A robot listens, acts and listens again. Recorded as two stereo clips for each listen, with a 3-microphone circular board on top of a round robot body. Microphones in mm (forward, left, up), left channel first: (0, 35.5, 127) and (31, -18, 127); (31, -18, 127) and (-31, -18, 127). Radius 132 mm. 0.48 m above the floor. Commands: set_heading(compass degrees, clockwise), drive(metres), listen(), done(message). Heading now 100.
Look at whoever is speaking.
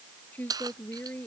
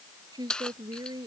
set_heading(275)
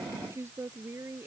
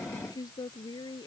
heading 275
set_heading(285)
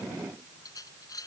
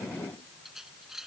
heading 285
listen()
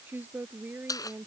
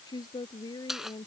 done("Found it: a woman speaking, straight ahead.")